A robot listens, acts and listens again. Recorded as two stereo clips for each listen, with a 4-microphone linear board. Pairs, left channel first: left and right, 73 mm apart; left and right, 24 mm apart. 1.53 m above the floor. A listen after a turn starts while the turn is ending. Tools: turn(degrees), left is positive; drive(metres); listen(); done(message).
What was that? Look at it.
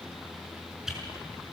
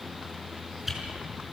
turn(degrees=-30)
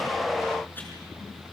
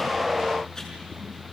listen()
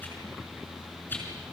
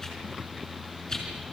turn(degrees=25)
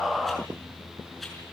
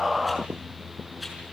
listen()
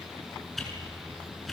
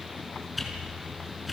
done("Facing the whoosh, over 4 m away.")